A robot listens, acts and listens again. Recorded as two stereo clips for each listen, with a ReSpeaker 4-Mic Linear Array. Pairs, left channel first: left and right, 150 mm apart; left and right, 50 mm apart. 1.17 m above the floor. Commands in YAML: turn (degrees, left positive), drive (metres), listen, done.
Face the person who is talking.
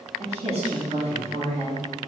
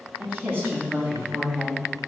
turn: -45
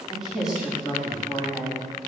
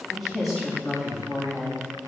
done: "Found it: a woman speaking, straight ahead, 2 to 4 m away."